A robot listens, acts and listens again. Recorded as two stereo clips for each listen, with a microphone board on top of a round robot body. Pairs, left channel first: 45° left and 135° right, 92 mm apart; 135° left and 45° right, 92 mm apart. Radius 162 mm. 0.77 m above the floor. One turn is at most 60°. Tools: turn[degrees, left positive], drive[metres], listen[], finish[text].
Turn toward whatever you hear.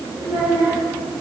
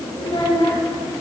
Thought: The child speaking: 170° left.
Action: turn[60]
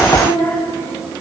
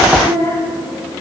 Thought: The child speaking is now 125° left.
Action: turn[60]
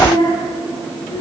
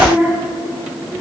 Thought: The child speaking is now 50° left.
Action: turn[50]
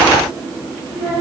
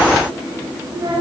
Action: finish[Found it: a child speaking, straight ahead.]